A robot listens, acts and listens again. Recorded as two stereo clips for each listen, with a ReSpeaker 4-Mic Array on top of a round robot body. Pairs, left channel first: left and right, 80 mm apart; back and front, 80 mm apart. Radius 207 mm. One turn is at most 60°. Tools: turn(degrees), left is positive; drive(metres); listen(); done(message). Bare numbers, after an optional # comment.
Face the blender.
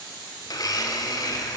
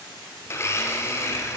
# The blender: 125° left.
turn(60)
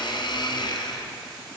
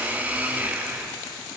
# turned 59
# The blender is now 70° left.
turn(60)
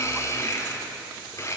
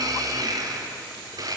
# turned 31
# The blender is now 35° left.
turn(35)
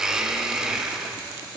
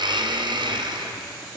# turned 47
# The blender is now 10° right.
turn(-10)
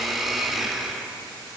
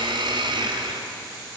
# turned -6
done("Facing the blender.")